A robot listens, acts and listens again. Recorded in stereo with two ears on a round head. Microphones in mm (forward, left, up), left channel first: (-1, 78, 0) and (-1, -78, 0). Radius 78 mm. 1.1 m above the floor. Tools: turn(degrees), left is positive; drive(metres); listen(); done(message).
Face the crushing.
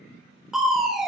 turn(degrees=30)
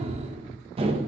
turn(degrees=-35)
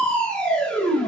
done("Found it: crushing, straight ahead, under 1 m away.")